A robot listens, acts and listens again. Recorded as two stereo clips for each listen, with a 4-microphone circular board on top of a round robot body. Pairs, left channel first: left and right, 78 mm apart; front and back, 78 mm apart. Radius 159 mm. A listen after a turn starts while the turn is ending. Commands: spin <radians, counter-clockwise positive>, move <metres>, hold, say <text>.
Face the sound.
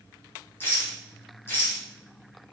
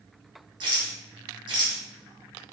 spin 2.71
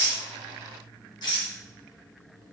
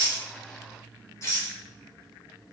spin 0.96
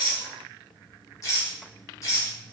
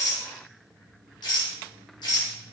spin 0.61
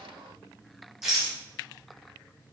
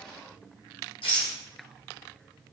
say Found it: a rattle, straight ahead, 1 to 2 m away.